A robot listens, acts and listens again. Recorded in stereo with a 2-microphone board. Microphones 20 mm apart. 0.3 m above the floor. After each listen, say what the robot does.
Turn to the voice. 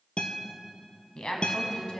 Turn 55° left.
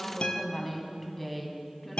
Turn 15° left.
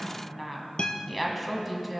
Facing the woman speaking, 1 to 2 m away.